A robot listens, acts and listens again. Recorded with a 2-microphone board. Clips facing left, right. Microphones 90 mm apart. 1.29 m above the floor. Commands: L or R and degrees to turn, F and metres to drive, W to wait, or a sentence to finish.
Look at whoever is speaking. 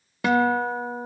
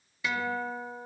W
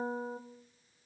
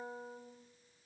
W
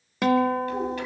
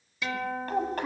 R45
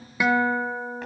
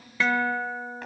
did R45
W
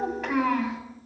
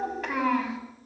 Found it: a child speaking, straight ahead.